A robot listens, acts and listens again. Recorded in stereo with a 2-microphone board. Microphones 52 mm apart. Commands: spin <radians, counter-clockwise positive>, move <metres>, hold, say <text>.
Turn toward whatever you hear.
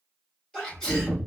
spin 0.52
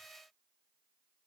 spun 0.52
hold
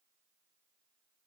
say I heard a sneeze, but can't make it out now. It was about 15° right or 135° left.